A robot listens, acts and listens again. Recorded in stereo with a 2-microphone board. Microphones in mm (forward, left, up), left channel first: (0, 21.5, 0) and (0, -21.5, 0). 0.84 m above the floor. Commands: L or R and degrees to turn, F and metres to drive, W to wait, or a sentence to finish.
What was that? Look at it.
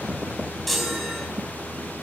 L30
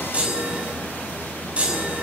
R30
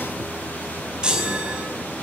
R20
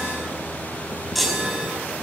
Found it: a chime, straight ahead, over 4 m away.